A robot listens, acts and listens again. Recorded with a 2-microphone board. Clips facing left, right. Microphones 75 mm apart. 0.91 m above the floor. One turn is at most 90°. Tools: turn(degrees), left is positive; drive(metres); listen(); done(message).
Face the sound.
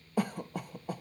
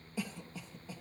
turn(degrees=55)
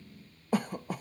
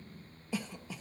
turn(degrees=55)
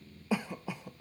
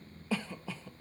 turn(degrees=15)
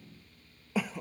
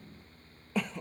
done("Facing the cough.")